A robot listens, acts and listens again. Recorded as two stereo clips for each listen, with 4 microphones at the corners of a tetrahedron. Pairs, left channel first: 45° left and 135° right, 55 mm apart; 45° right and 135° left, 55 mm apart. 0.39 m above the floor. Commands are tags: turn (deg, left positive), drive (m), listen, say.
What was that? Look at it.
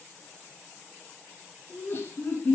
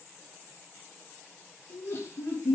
<say>Facing the laughter.</say>